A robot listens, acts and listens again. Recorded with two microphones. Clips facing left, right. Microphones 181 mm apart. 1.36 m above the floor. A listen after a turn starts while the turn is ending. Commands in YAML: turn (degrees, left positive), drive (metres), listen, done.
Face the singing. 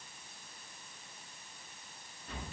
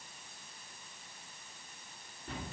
listen: true
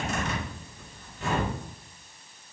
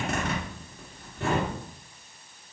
listen: true
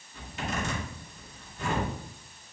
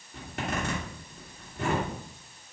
done: "I can't make out singing, only a zipper."